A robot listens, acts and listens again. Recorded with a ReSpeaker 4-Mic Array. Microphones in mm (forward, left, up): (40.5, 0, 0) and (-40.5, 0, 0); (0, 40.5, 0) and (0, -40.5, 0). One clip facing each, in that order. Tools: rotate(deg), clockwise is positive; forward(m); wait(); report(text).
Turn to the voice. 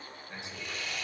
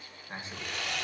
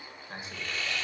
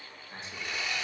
rotate(-130)
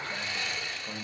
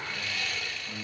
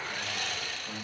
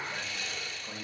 report("Found it: a man speaking, straight ahead.")